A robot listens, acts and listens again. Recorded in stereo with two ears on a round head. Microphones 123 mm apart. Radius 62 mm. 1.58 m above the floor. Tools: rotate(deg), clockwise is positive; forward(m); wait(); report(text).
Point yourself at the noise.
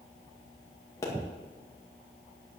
rotate(-25)
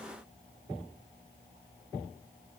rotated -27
wait()
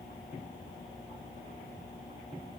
report("I heard a pop, but can't make it out now. It was about 5° right or 130° left.")